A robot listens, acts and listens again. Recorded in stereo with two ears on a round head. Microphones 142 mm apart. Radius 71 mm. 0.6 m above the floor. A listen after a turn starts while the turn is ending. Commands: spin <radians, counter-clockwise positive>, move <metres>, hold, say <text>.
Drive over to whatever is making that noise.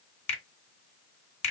spin 0.79
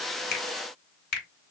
spin 1.40
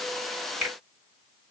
move 1.0
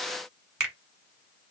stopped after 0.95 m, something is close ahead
say I am next to the finger snap.